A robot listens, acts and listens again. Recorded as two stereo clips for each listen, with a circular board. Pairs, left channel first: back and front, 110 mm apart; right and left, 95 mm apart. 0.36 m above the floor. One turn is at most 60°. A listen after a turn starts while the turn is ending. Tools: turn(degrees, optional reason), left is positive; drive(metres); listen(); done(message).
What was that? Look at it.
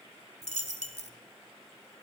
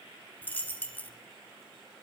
turn(degrees=-60, reason="The dropped coin: 165° right.")
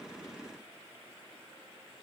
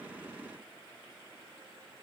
turn(degrees=-60, reason="Nothing new. It was at 105° right.")
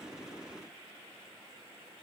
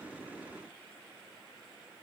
turn(degrees=-45, reason="Nothing new. It was at 45° right.")
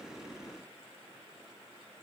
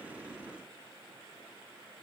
done("Facing where the dropped coin came from. I can't hear it now.")